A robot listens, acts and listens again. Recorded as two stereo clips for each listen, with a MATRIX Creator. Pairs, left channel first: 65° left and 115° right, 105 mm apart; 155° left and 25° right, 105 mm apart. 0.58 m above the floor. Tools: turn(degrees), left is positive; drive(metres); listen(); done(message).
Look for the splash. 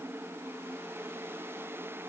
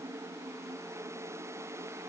listen()
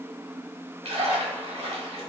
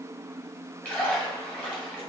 turn(degrees=-130)
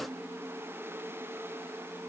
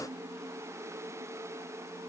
done("Facing where the splash came from. I can't hear it now.")